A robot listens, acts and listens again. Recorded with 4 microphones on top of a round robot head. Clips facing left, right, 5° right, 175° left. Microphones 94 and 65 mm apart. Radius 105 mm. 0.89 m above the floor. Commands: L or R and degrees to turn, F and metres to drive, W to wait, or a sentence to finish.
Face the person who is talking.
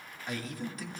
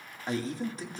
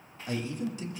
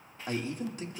R145
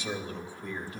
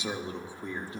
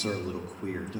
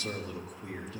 R25
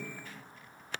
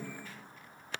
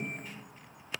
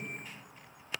Facing the man speaking, 2 to 4 m away.